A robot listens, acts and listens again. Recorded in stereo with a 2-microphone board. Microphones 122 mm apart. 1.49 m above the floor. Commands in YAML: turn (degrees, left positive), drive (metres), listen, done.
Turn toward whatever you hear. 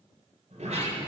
turn: -70
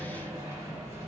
turn: -25
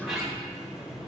done: "Found it: a sliding door, straight ahead."